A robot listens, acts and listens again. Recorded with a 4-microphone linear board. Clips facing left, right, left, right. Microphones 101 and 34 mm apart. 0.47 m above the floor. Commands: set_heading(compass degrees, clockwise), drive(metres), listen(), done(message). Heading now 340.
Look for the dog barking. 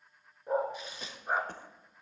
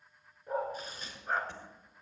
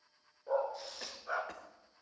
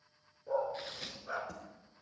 set_heading(310)
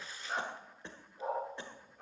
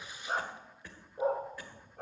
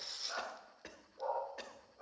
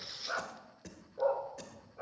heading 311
set_heading(16)
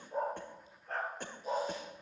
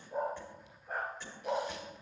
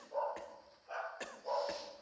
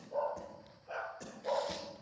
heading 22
set_heading(37)
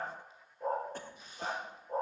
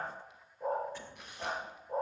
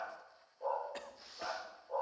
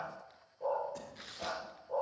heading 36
done("Facing the dog barking.")